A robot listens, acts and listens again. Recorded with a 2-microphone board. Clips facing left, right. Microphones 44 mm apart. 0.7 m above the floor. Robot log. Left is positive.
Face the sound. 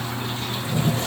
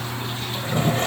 note: The toilet flushing: about 50° right or 130° right.
cmd yaw -50
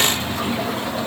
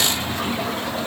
end: Facing the toilet flushing.